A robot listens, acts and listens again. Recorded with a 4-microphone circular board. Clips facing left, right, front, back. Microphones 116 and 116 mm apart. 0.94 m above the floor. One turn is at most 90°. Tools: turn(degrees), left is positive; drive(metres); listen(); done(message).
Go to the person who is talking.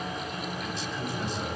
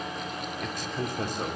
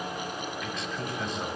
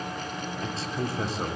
turn(degrees=-90)
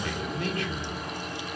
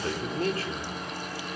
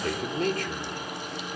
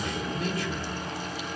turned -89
turn(degrees=-35)
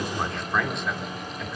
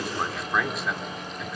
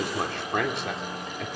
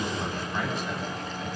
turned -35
drive(metres=1.0)
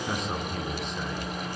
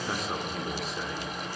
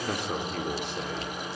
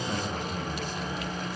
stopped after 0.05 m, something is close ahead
done("Blocked. The man speaking is further on, straight ahead.")